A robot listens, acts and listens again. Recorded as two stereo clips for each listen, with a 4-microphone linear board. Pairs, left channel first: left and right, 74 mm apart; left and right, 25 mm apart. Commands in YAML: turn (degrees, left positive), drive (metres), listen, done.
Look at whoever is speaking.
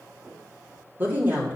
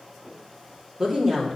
turn: -25
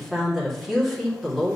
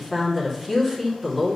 done: "Found it: a woman speaking, straight ahead."